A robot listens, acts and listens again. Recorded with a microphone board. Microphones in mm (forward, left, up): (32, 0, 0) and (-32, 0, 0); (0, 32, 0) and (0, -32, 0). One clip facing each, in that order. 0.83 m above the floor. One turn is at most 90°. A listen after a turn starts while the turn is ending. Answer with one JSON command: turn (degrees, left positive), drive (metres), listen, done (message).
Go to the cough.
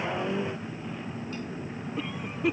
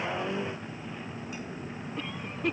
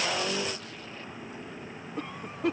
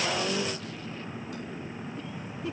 {"turn": 85}
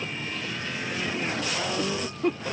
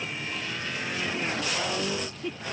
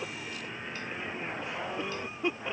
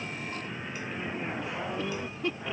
{"turn": 20}
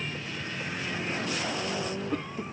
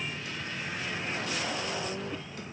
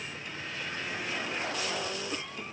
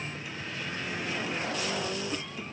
{"listen": true}
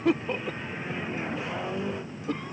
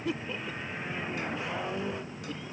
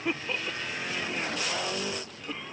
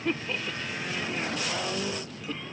{"turn": 10}
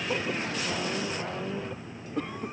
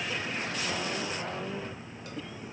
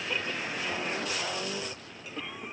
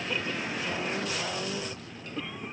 {"drive": 1.0}
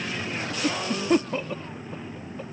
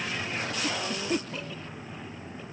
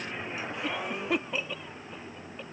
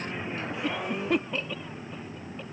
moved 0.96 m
{"drive": 1.0}
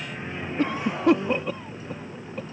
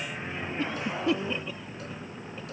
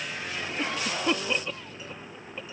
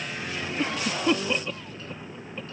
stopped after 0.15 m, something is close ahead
{"done": "Arrived at the cough, straight ahead."}